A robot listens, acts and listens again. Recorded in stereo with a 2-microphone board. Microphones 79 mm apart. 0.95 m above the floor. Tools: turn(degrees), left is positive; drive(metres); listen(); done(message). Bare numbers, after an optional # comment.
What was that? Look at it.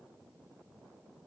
listen()
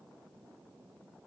listen()
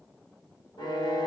# The violin: about 70° left or 110° left.
turn(70)
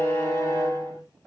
# So it is at 40° left.
turn(40)
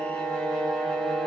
# The violin is now 10° left.
turn(10)
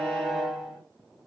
done("Found it: a violin, straight ahead, 2 to 4 m away.")